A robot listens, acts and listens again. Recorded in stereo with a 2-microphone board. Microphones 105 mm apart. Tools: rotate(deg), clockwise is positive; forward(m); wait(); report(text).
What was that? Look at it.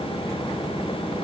wait()
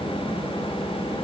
wait()
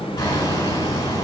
rotate(-35)
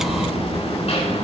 rotate(-110)
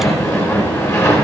rotate(-25)
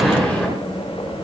rotate(-15)
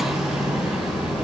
report("Found it: hammering, straight ahead, over 4 m away.")